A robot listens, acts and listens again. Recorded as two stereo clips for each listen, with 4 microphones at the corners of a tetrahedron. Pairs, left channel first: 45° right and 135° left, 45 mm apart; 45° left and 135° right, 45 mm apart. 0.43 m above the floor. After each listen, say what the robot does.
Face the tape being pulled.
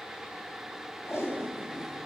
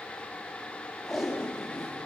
Turn 55° right.
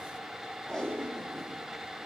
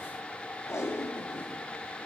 Turn 25° left.
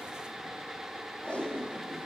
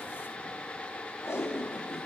Turn 10° left.
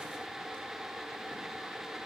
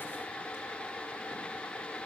Keep listening.
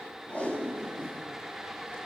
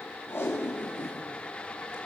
Found it: tape being pulled, straight ahead, over 4 m away.